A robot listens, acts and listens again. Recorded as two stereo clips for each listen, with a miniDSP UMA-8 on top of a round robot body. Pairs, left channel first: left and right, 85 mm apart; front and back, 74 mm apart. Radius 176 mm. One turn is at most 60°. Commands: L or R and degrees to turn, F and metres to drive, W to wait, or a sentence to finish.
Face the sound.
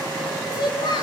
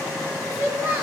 L60
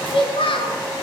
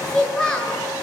L60
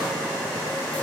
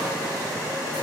L20
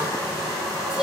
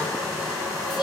W
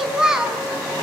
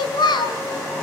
R10
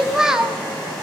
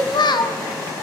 R10
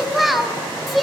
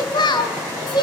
Facing the child speaking.